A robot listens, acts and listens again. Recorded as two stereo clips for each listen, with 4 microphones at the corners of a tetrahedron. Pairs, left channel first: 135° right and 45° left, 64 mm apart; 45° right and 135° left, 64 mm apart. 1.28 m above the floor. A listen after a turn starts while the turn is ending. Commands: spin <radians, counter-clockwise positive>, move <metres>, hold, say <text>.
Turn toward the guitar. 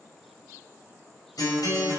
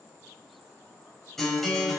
spin -2.27
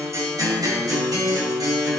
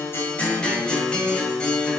spin 0.52
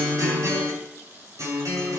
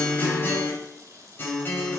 spin 0.17
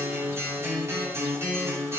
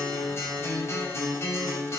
say Found it: a guitar, straight ahead.